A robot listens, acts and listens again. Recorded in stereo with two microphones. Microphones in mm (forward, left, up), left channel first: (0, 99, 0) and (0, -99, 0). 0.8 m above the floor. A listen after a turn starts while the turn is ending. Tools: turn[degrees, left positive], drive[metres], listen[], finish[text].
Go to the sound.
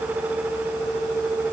Action: listen[]
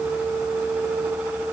Action: listen[]
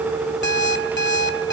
Thought: The alarm clock: about 60° left or 120° left.
Action: turn[60]
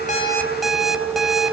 Action: drive[1.0]
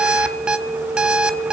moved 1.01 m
Action: drive[1.0]
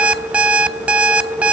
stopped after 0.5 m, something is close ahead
Action: finish[I am next to the alarm clock.]